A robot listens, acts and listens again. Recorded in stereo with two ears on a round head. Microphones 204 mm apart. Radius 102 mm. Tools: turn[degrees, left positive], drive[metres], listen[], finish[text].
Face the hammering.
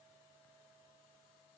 Action: listen[]
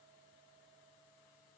Action: listen[]
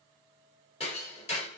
Thought: The hammering: about 30° left or 150° left.
Action: turn[30]
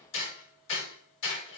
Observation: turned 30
Thought: So it is at 120° left.
Action: turn[120]
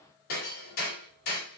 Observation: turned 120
Thought: The hammering is now 40° left.
Action: turn[40]
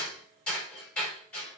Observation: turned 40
Action: finish[Found it: hammering, straight ahead.]